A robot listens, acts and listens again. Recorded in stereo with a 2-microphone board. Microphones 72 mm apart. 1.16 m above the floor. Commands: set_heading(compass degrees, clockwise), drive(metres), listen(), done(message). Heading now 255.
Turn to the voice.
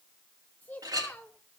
set_heading(230)
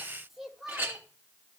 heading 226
done("Found it: a child speaking, straight ahead, 1 to 2 m away.")